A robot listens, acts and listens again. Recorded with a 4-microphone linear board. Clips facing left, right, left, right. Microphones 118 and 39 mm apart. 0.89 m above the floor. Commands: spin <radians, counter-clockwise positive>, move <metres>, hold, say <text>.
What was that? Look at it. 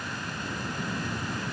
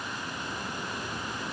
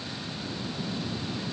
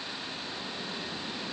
hold
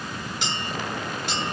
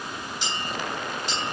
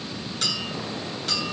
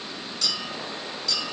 spin 1.13
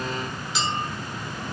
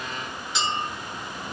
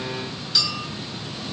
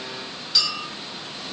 say Found it: a clink, straight ahead.